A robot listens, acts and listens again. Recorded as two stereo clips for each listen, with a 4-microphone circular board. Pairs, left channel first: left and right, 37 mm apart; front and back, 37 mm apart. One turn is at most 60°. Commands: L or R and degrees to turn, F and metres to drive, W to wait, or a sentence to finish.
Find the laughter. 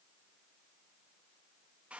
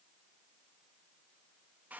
W
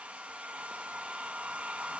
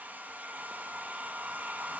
W
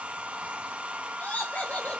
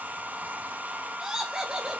L60
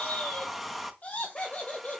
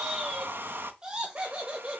L60
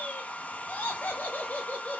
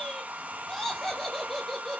L60
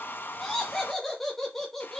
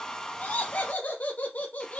L10
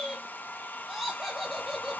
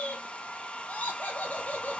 Facing the laughter.